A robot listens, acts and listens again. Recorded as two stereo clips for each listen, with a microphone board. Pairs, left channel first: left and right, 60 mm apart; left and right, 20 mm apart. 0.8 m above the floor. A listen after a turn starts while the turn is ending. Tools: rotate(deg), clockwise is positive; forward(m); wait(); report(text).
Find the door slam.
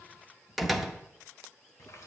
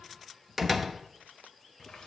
rotate(-30)
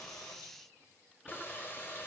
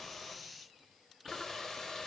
wait()
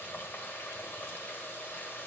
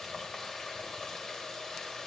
report("I heard a door slam, but can't make it out now. It was about 30° right or 150° left.")